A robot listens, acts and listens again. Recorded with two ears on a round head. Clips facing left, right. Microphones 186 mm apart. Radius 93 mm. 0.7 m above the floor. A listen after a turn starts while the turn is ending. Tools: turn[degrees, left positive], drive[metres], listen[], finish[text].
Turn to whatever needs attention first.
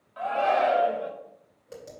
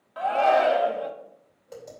Thought: The shout: about 60° right or 120° right.
Action: turn[-60]
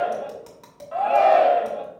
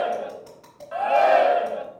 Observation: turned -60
Thought: So it is at 15° right.
Action: turn[-15]
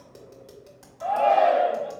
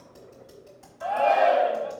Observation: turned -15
Action: finish[Found it: a shout, straight ahead, 1 to 2 m away.]